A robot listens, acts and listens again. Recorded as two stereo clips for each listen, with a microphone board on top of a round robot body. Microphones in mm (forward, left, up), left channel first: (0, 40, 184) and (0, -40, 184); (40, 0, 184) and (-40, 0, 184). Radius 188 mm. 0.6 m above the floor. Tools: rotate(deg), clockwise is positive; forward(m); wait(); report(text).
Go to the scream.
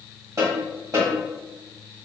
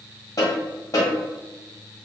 wait()
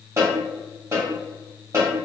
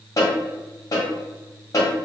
wait()
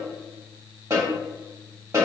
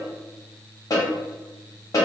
report("I can't make out a scream, only a snare drum.")